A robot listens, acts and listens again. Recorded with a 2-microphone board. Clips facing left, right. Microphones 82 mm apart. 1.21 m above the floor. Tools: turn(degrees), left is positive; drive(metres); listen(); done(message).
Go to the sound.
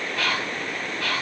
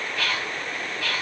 turn(degrees=90)
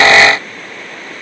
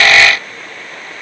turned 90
listen()
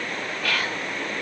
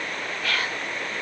drive(metres=1.0)
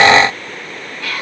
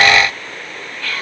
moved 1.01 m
turn(degrees=10)
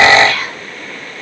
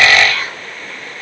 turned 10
drive(metres=1.0)
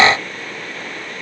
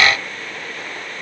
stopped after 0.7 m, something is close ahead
listen()
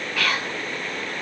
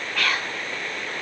done("I am next to the whispering.")